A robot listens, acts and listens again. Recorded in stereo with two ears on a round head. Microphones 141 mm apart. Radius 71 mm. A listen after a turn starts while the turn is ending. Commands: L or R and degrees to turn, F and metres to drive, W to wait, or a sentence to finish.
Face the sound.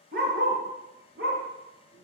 R90
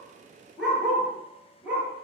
R10
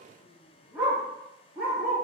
Facing the dog barking.